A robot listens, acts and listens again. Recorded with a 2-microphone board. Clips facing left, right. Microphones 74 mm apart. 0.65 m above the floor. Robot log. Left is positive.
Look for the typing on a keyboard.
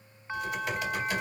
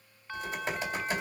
note: The typing on a keyboard: about 30° right or 150° right.
cmd yaw -30
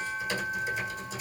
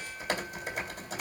note: So it is at 120° right.
cmd yaw -120
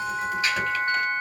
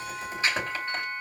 note: The typing on a keyboard is now 30° right.
cmd yaw -30
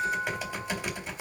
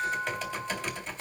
note: The typing on a keyboard is now 10° left.
cmd yaw +10
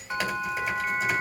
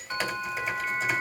end: Facing the typing on a keyboard, 2 to 4 m away.